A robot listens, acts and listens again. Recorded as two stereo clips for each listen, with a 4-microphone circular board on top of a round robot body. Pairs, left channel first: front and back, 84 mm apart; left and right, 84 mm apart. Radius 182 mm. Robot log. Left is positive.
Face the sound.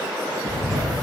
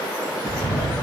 note: The bird: 155° left.
cmd yaw +155
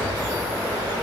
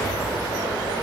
note: The bird is now 55° left.
cmd yaw +55
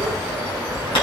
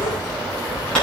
note: The bird is now 10° left.
cmd yaw +10
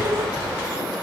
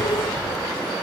end: Facing the bird, over 4 m away.